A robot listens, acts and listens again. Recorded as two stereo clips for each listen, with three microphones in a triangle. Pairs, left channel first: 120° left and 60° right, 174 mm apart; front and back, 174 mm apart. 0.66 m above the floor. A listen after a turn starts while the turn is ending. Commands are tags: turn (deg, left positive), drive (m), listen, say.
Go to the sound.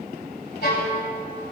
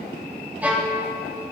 <turn deg="100"/>
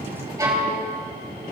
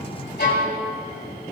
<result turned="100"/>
<drive m="1.0"/>
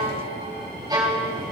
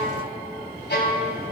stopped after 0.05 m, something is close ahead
<say>Something is in my way. I am facing the violin but have not reached it.</say>